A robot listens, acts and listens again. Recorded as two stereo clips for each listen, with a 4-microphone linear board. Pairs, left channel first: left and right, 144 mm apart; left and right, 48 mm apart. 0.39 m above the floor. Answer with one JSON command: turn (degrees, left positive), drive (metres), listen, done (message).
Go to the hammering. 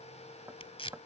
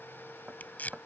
{"turn": -15}
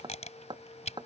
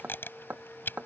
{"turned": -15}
{"turn": -150}
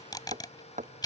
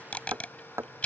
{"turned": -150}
{"turn": -60}
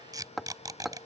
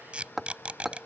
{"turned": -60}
{"drive": 1.0}
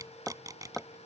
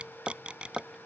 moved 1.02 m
{"drive": 1.0}
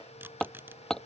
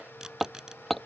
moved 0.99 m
{"drive": 1.0}
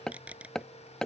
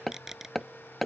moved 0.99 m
{"drive": 1.0}
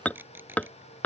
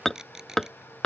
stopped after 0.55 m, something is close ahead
{"turn": 10}
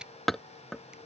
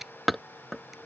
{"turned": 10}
{"done": "I am next to the hammering."}